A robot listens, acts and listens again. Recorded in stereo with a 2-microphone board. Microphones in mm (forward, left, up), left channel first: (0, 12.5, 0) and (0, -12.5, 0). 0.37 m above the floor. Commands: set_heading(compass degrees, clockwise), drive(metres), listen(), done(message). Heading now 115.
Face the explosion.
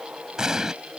set_heading(140)
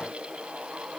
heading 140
listen()
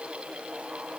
done("I heard an explosion, but can't make it out now. It was about straight ahead or 130° right.")